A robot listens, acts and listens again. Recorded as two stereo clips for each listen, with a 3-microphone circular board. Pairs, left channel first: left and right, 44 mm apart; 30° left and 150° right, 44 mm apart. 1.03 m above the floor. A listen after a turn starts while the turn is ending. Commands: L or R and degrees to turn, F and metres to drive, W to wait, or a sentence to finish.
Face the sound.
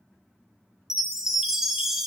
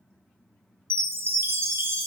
R170
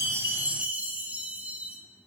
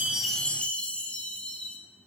R35
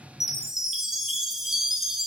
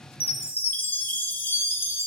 Found it: a chime, straight ahead, under 1 m away.